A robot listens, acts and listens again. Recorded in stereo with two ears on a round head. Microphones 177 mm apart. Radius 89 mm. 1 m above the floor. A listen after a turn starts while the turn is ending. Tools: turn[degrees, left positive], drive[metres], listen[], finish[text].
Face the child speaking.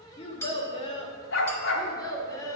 Thought: The child speaking: about 20° left or 160° left.
Action: turn[20]
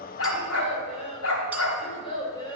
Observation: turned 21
Thought: The child speaking: about 25° left or 155° left.
Action: turn[25]
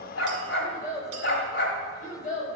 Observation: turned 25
Thought: So it is at 140° left.
Action: turn[140]
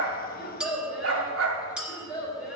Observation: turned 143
Action: finish[Facing the child speaking, 2 to 4 m away.]